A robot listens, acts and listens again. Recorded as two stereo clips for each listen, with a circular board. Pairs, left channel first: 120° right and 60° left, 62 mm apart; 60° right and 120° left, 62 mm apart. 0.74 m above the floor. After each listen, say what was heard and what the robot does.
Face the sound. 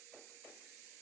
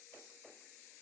Keep listening.
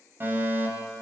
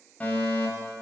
Facing the fire alarm, over 4 m away.